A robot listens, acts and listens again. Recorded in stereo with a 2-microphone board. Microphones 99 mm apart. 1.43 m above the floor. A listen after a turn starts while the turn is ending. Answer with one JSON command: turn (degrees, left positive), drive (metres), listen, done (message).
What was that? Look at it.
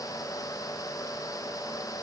{"listen": true}
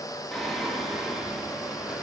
{"turn": -30}
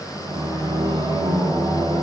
{"turn": -135}
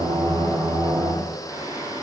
{"turn": -35}
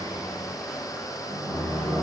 {"done": "Facing the singing."}